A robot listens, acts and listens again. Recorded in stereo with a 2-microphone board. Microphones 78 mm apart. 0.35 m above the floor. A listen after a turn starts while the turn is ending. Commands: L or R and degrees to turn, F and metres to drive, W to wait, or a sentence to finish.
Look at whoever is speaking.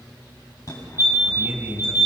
R25
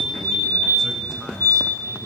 W
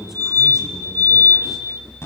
Found it: a man speaking, straight ahead.